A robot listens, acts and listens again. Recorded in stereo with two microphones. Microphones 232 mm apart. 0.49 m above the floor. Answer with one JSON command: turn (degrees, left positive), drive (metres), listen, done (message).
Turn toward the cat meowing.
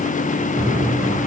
{"turn": -30}
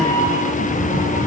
{"turn": 20}
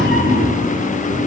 {"done": "Facing the cat meowing, over 4 m away."}